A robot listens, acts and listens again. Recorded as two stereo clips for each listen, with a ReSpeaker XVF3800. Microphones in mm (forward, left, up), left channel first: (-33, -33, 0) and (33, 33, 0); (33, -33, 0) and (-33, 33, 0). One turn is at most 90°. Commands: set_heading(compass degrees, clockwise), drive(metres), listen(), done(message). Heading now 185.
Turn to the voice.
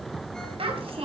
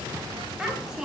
set_heading(135)
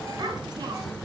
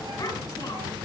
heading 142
done("Found it: a child speaking, straight ahead, over 4 m away.")